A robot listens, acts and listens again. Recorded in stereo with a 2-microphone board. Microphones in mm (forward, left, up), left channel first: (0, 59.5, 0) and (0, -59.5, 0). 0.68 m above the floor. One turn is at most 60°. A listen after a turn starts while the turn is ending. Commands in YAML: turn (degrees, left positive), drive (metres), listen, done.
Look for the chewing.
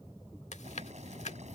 turn: 60
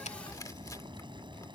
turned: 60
turn: 30
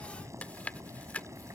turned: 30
turn: 15
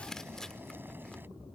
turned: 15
done: "Found it: chewing, straight ahead."